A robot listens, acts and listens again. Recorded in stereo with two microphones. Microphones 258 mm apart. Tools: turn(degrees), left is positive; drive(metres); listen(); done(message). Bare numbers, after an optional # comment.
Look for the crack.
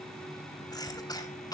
listen()
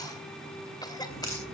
# The crack: about 55° left or 125° left.
turn(55)
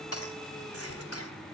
listen()
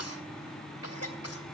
done("I heard a crack, but can't make it out now. It was about straight ahead or 70° left.")